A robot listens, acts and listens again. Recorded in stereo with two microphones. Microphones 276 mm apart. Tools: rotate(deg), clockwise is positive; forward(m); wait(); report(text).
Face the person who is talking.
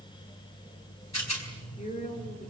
rotate(-25)
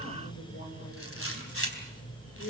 rotate(-130)
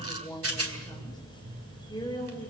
rotate(-15)
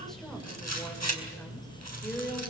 report("Facing the woman speaking, over 4 m away.")